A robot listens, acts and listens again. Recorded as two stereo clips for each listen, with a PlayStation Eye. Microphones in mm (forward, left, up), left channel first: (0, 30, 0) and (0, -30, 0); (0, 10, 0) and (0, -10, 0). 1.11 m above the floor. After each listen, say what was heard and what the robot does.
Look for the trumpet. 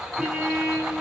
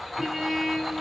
The trumpet: about 15° right or 165° right. Turn 15° right.
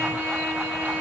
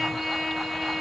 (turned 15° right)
So it is at 150° right. Turn 150° right.
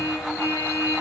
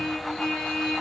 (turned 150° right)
The trumpet is now 40° left. Turn 40° left.
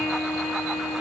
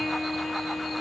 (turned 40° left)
The trumpet is now 10° right. Turn 10° right.
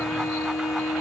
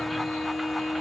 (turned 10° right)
Found it: a trumpet, straight ahead, 2 to 4 m away.